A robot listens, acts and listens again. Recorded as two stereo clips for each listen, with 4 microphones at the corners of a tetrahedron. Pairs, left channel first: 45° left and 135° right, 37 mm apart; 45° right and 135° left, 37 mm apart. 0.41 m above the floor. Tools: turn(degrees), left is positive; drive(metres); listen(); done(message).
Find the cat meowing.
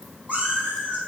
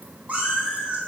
turn(degrees=-175)
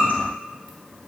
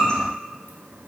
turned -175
turn(degrees=15)
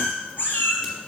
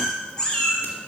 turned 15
turn(degrees=25)
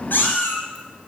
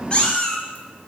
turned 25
turn(degrees=25)
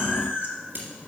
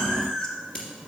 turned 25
turn(degrees=25)
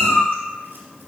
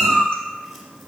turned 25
turn(degrees=10)
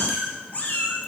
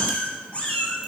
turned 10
done("Found it: a cat meowing, straight ahead, 1 to 2 m away.")